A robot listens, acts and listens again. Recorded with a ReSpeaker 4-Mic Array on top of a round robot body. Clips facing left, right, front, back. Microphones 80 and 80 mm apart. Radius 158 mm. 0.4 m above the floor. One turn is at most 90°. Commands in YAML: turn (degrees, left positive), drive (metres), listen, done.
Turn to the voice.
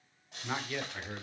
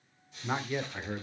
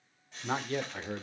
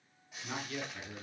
turn: -20
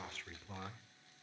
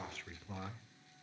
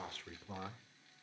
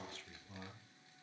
done: "Found it: a man speaking, straight ahead, 1 to 2 m away."